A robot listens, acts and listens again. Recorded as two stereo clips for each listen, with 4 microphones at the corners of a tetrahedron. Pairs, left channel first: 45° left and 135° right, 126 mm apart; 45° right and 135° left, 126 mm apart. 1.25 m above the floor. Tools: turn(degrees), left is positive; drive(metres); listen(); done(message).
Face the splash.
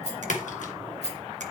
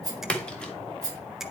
turn(degrees=40)
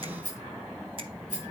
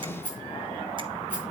done("I heard a splash from this way, but can't make it out now.")